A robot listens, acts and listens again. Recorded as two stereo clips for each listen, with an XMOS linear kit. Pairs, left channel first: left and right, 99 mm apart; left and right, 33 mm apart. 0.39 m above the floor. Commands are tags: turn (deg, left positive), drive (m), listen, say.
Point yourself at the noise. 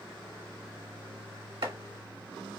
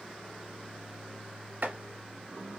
<turn deg="-70"/>
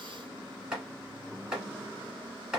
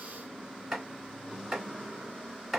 <say>Facing the chopping, 1 to 2 m away.</say>